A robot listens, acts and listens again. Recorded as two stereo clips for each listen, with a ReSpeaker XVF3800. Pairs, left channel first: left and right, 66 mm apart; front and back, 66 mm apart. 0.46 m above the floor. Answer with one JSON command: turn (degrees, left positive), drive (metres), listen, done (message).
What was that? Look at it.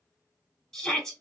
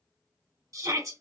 {"turn": 170}
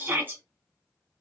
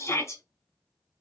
{"turn": -35}
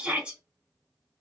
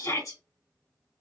{"turn": -20}
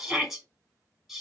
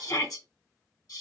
{"done": "Facing the shout, 2 to 4 m away."}